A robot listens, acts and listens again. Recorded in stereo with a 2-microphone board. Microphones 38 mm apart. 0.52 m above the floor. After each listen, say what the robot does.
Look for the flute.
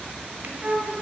Turn 35° right.
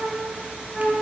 Facing the flute, 1 to 2 m away.